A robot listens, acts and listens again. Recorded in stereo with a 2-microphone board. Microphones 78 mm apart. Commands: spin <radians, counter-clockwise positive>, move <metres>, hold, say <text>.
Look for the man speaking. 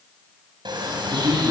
spin -0.96
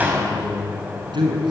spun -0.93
spin -1.40
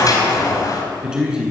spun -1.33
spin -0.17
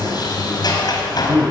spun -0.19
spin -0.17
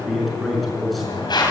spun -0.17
say Found it: a man speaking, straight ahead.